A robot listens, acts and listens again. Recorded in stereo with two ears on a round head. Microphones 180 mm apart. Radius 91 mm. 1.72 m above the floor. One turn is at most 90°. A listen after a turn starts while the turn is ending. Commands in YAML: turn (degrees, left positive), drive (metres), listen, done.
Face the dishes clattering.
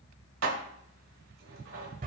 turn: -70
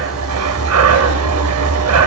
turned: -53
listen: true
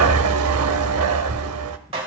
turn: -30
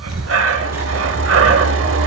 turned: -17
turn: -15
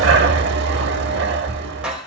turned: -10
done: "Found it: dishes clattering, straight ahead, 2 to 4 m away."